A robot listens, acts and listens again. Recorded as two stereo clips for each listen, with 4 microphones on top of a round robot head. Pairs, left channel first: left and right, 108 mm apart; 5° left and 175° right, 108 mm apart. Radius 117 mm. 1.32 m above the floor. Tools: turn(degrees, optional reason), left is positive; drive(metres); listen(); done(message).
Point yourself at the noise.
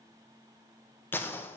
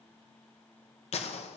turn(degrees=20, reason="The gunshot: 20° left.")
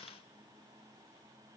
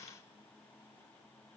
done("I heard a gunshot from this way, but can't make it out now.")